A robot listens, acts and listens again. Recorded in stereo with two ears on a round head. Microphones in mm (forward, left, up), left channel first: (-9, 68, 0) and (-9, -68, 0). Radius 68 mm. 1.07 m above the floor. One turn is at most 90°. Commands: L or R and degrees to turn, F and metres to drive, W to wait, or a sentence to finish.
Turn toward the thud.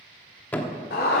L30
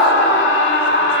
W
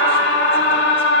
I heard a thud, but can't make it out now. It was about 20° right or 140° left.